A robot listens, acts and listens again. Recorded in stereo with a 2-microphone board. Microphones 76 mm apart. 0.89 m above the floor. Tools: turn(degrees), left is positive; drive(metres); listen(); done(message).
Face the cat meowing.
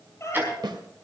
turn(degrees=40)
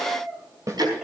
done("Found it: a cat meowing, straight ahead.")